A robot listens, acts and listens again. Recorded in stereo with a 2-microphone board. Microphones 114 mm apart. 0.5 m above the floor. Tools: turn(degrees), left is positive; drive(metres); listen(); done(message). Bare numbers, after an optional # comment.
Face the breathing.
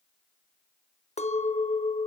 listen()
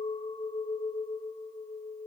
listen()
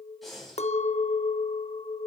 turn(30)
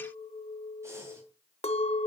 listen()
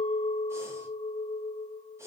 listen()
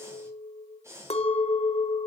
# So it is at 25° right.
turn(-25)
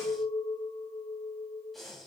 done("Facing the breathing, 2 to 4 m away.")